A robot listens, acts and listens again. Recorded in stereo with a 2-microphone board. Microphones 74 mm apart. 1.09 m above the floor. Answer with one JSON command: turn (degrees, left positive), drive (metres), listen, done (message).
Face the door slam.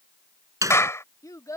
{"turn": -50}
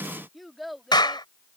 {"listen": true}
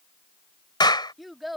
{"done": "I heard a door slam, but can't make it out now. It was about straight ahead or 80° right."}